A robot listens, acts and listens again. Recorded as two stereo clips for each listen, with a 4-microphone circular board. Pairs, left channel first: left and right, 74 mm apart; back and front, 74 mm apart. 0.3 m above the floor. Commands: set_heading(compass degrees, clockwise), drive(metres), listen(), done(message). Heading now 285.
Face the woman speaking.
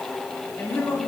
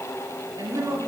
set_heading(250)
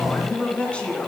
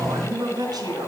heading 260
set_heading(245)
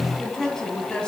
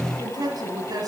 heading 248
set_heading(233)
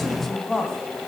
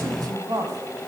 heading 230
set_heading(220)
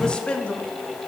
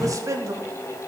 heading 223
set_heading(198)
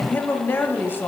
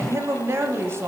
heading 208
set_heading(168)
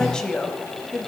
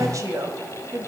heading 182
set_heading(167)
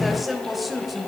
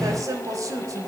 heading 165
done("Facing the woman speaking.")